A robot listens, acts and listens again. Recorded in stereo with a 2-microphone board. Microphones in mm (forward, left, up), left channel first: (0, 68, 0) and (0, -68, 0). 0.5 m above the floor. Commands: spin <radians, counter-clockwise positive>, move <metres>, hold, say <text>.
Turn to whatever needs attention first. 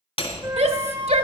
spin -0.87
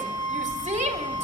hold
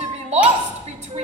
spin -1.22
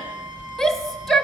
say Facing the shout, 1 to 2 m away.